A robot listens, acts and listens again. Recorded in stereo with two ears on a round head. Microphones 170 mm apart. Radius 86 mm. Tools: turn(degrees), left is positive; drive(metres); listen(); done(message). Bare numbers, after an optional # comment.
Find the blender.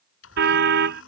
turn(90)
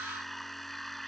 done("Found it: a blender, straight ahead.")